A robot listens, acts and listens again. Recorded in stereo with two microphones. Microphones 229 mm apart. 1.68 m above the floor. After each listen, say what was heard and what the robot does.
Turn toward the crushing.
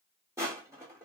Turn 30° right.
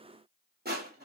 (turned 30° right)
So it is at 135° right. Turn 135° right.
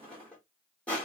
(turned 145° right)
Found it: crushing, straight ahead, 1 to 2 m away.